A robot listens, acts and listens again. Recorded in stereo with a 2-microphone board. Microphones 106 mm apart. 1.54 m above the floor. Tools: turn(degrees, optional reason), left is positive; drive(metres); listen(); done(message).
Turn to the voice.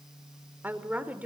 turn(degrees=-30)
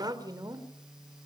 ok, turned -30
turn(degrees=-145, reason="So it is at 145° right.")
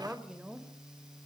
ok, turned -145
turn(degrees=-10, reason="The woman speaking is now 10° right.")
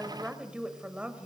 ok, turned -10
turn(degrees=-10, reason="The woman speaking is now 10° right.")
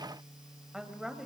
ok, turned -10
done("Found it: a woman speaking, straight ahead.")